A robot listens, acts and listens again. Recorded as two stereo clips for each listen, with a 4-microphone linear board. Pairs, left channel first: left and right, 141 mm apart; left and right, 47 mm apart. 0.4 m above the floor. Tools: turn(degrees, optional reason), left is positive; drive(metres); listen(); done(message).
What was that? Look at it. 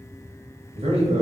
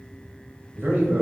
turn(degrees=-50, reason="The man speaking: about 50° right or 130° right.")
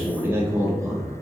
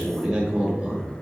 turn(degrees=-25, reason="So it is at 25° right.")
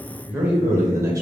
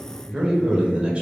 turn(degrees=-25, reason="The man speaking is now 25° right.")
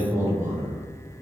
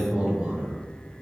turn(degrees=-20, reason="The man speaking is now 20° right.")
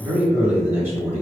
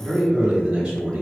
turn(degrees=-20, reason="The man speaking is now 20° right.")
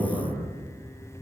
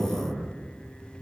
done("Facing the man speaking.")